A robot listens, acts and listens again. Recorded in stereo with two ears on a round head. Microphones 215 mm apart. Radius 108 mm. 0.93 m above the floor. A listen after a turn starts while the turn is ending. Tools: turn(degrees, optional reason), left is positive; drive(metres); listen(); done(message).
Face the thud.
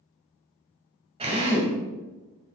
listen()
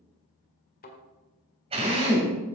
turn(degrees=40, reason="The thud: about 40° left or 140° left.")
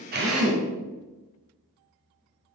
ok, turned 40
listen()
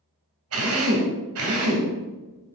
done("I heard a thud, but can't make it out now. It was about straight ahead or 100° left.")